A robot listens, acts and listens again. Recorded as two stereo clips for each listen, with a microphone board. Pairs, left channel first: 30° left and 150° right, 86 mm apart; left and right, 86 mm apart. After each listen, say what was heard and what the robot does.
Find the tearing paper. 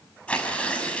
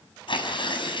The tearing paper: 105° left. Turn 105° left.
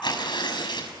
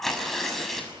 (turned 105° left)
Found it: tearing paper, straight ahead.